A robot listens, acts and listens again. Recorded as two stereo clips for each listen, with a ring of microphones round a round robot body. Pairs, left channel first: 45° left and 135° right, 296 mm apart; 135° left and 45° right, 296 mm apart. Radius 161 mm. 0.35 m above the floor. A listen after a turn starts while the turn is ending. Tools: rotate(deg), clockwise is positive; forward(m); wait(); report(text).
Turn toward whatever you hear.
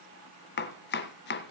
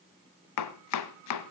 rotate(-100)
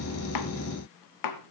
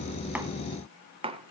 rotate(-30)
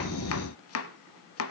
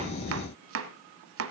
report("Facing the chopping.")